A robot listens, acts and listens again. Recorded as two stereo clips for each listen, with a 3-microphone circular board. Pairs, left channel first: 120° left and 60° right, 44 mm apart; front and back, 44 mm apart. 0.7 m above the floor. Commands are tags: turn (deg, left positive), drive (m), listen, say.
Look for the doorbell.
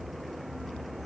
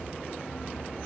<listen/>
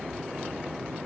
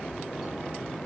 <listen/>
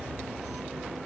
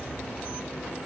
<say>I can't make out a doorbell to turn to.</say>